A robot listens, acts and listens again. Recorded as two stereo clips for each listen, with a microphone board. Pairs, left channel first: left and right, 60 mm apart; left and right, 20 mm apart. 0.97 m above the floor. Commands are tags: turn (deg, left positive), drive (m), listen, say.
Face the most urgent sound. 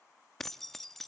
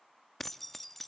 <listen/>
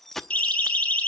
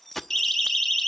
<turn deg="20"/>
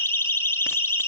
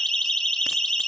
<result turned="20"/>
<turn deg="145"/>
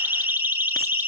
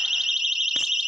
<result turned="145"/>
<turn deg="-30"/>
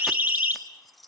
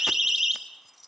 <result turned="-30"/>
<turn deg="-25"/>
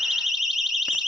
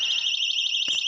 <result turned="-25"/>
<say>Found it: a siren, straight ahead, 2 to 4 m away.</say>